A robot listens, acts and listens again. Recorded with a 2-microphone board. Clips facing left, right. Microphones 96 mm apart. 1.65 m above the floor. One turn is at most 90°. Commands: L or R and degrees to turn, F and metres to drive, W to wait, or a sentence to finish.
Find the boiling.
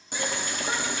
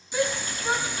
L60
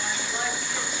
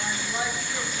L30
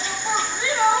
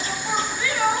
Found it: boiling, straight ahead.